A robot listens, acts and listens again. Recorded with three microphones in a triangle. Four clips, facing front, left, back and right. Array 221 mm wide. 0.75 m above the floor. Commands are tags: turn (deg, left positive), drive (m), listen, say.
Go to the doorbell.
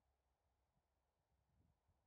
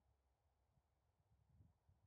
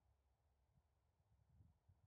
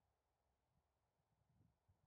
<listen/>
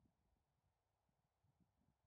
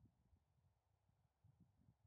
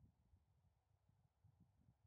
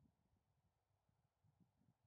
<listen/>
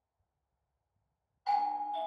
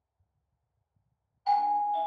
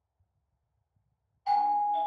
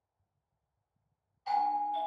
<turn deg="115"/>
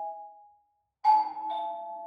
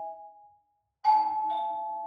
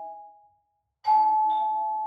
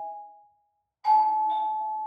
<turn deg="25"/>
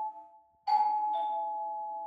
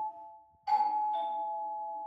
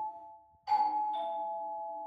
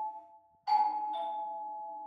<drive m="1.0"/>
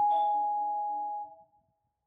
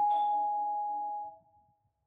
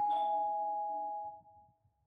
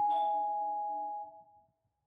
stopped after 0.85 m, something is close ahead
<say>I am next to the doorbell.</say>